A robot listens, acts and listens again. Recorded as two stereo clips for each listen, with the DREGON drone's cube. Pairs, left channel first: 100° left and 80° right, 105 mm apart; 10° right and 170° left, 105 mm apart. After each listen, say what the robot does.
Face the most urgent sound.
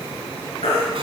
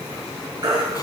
Turn 120° left.
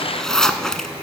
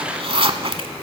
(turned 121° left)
Keep listening.
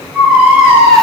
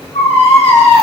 Facing the baby crying, over 4 m away.